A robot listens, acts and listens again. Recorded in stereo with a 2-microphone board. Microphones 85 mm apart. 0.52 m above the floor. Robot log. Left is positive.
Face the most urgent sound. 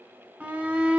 note: The shout: about 20° right or 160° right.
cmd yaw -20
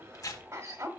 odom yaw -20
note: So it is at 135° right.
cmd yaw -135
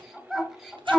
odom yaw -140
end: Facing the shout.